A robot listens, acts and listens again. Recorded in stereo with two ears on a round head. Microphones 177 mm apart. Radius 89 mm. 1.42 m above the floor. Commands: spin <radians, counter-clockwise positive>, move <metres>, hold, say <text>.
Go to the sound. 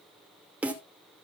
spin -0.52
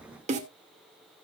spin -2.53
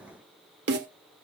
spin -0.96
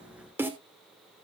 spin -0.17
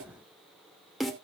move 1.0
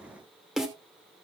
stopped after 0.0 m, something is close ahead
say Blocked. The snare drum is further on, straight ahead.